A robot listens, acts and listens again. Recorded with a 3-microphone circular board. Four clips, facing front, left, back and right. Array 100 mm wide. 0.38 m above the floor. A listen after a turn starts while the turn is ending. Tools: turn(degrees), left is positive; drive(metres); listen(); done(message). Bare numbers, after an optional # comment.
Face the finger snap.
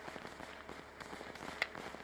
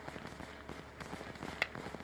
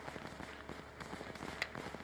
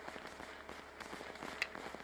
# The finger snap: 60° left.
turn(60)
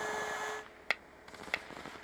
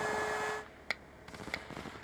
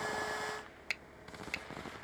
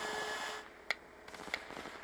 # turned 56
done("Found it: a finger snap, straight ahead.")